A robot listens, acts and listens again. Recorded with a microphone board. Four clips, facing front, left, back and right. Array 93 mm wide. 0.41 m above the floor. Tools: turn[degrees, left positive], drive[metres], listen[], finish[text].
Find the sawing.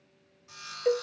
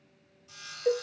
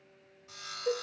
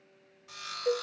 Thought: The sawing: 85° right.
Action: turn[-85]
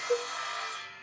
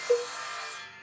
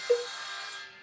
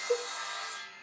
Thought: The sawing is now 30° left.
Action: turn[30]
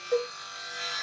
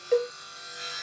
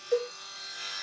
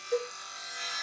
Thought: The sawing is now 15° right.
Action: turn[-15]
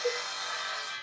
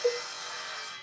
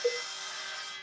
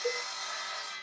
Action: finish[Facing the sawing, 1 to 2 m away.]